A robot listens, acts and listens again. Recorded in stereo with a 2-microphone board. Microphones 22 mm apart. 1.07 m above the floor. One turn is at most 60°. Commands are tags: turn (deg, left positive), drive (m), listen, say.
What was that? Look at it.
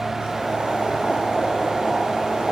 <turn deg="-50"/>
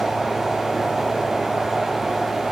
<turn deg="-10"/>
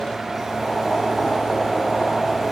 <say>Found it: boiling, straight ahead, 1 to 2 m away.</say>